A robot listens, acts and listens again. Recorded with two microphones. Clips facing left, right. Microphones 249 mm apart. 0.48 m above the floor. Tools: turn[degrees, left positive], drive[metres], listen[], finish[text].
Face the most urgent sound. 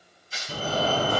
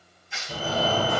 Thought: The fire alarm: about 45° left or 135° left.
Action: turn[45]
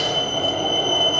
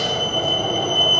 Action: finish[Found it: a fire alarm, straight ahead.]